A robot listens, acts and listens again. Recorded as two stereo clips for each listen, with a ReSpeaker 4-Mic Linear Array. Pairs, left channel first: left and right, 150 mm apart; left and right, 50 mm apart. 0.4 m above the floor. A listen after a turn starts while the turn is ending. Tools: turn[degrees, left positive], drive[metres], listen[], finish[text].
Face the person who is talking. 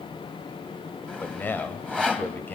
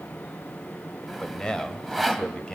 Action: turn[30]
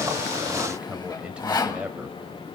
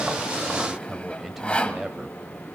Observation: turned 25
Thought: So it is at 10° right.
Action: turn[-10]
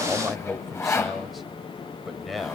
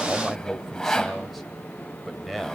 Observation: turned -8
Action: finish[Facing the man speaking.]